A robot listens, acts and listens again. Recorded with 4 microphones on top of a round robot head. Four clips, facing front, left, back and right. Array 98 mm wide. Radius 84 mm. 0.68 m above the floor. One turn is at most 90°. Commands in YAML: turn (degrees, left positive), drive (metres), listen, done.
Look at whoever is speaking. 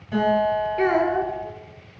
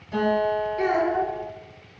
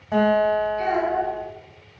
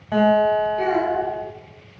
turn: 10
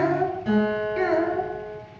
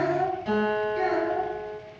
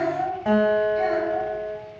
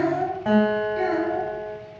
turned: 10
done: "Found it: a child speaking, straight ahead, 1 to 2 m away."